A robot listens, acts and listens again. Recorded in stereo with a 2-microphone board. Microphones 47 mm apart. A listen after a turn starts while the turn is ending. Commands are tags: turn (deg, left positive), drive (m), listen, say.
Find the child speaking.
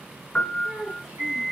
<turn deg="-30"/>
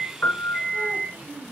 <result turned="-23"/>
<turn deg="-150"/>
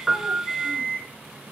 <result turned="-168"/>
<turn deg="20"/>
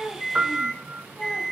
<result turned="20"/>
<listen/>
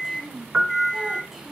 <say>Facing the child speaking.</say>